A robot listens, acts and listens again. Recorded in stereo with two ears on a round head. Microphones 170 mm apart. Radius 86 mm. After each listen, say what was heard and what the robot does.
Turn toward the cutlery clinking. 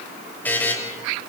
Keep listening.
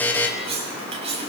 The cutlery clinking: about 35° right or 145° right. Turn 35° right.
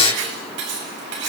So it is at 110° right. Turn 110° right.
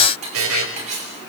The cutlery clinking is now 35° right. Turn 35° right.
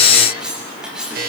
Facing the cutlery clinking.